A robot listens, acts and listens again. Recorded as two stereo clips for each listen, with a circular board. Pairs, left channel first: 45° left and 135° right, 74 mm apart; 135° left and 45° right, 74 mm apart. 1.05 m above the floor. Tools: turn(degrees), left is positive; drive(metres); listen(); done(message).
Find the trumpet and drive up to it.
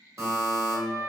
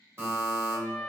turn(degrees=-140)
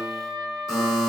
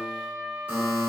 turn(degrees=-20)
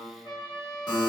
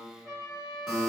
drive(metres=1.0)
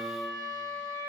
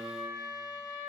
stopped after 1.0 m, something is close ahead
done("I am next to the trumpet.")